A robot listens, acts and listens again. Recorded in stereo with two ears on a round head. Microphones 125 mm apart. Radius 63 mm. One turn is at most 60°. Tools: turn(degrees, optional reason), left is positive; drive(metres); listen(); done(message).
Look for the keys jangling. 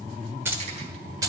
turn(degrees=-30, reason="The keys jangling: about 30° right or 150° right.")
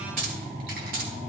turn(degrees=-60, reason="So it is at 110° right.")
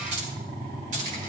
turn(degrees=-55, reason="The keys jangling is now 55° right.")
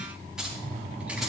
done("Found it: keys jangling, straight ahead, over 4 m away.")